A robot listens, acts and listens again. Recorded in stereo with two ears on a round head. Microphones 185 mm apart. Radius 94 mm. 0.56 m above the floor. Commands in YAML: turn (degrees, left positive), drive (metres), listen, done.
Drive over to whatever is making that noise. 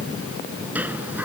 turn: -30
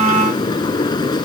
turn: 20
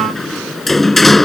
drive: 1.0
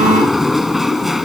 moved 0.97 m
drive: 1.0
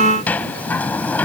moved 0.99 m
turn: 10
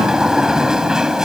drive: 1.0
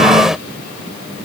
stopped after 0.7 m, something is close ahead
done: "Arrived at the sliding door, straight ahead."